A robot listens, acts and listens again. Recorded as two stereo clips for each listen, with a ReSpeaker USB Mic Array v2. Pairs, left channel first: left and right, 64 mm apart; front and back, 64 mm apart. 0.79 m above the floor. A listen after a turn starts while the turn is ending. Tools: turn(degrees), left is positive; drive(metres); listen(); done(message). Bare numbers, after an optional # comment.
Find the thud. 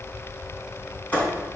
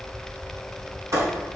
# The thud: 155° left.
turn(155)
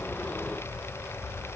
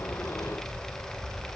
done("I heard a thud from this way, but can't make it out now.")